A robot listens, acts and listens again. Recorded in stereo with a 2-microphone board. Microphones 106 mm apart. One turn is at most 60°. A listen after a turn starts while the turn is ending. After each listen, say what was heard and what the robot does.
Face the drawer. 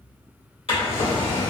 The drawer: about 60° left or 120° left. Turn 60° left.
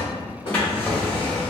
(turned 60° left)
So it is at 15° left. Turn 15° left.
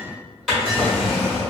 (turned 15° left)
Found it: a drawer, straight ahead, 1 to 2 m away.